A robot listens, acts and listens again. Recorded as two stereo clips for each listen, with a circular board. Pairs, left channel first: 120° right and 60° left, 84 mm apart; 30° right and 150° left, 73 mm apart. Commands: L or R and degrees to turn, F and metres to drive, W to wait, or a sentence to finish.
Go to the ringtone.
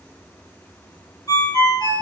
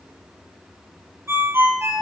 R155
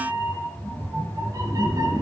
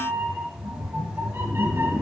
W
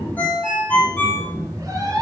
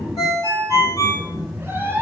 R50
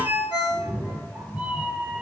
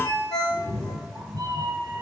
R15
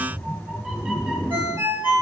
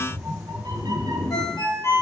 F1.0
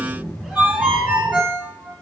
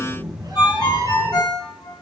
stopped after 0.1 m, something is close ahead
Blocked. The ringtone is further on, straight ahead.